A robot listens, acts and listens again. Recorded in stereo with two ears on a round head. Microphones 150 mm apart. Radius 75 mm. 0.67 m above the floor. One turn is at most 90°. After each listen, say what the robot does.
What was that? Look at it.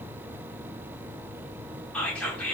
Turn 30° left.
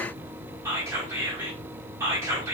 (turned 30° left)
Turn 20° right.
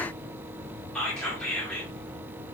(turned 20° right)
Found it: whispering, straight ahead.